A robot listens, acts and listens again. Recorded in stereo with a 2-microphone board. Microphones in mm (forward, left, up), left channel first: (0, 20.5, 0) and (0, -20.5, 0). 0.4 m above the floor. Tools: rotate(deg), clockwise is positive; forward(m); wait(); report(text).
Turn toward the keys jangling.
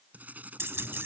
rotate(70)
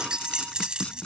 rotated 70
rotate(25)
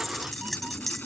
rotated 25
report("Facing the keys jangling.")